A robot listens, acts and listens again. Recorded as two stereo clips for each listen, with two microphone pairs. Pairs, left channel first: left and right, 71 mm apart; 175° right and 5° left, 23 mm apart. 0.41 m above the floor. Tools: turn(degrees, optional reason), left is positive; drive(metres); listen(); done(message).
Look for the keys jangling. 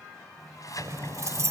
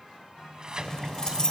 turn(degrees=-125, reason="The keys jangling: 125° right.")
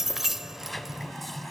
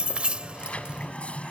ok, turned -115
done("Facing the keys jangling.")